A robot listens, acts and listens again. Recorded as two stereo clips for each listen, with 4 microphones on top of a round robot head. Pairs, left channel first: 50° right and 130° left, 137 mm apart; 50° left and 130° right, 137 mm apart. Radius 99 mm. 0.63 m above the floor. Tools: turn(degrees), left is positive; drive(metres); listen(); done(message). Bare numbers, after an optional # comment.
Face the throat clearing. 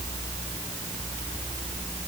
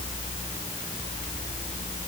listen()
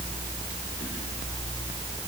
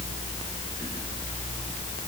listen()
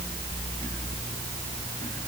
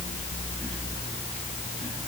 done("I can't make out throat clearing to turn to.")